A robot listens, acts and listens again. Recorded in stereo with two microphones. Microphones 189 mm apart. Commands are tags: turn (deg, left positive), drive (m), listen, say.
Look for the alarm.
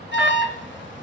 <turn deg="90"/>
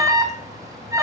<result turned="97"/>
<turn deg="-15"/>
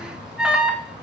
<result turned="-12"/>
<say>Facing the alarm, 2 to 4 m away.</say>